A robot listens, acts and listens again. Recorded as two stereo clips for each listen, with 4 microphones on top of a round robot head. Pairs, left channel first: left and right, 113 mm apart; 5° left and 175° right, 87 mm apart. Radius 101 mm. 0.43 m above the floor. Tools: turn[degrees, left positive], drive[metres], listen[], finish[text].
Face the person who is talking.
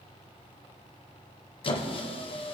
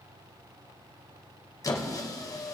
Action: listen[]
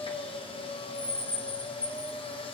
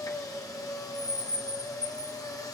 Action: listen[]
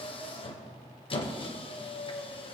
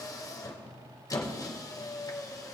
Action: finish[I can't make out anyone speaking to turn to.]